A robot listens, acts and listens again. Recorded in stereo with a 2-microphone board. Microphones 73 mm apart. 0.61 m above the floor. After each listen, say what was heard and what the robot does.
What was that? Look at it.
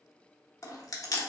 The chewing: about 50° left or 130° left. Turn 50° left.
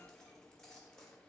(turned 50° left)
Keep listening.
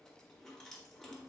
Keep listening.
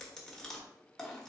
I heard chewing, but can't make it out now. It was about straight ahead or 80° left.